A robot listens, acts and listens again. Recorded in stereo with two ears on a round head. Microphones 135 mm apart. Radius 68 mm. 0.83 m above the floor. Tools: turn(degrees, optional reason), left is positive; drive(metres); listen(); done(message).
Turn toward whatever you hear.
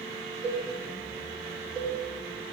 turn(degrees=-40, reason="The cowbell: about 40° right or 140° right.")
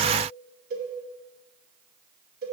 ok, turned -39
turn(degrees=-100, reason="So it is at 100° right.")
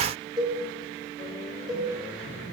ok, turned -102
done("Found it: a cowbell, straight ahead.")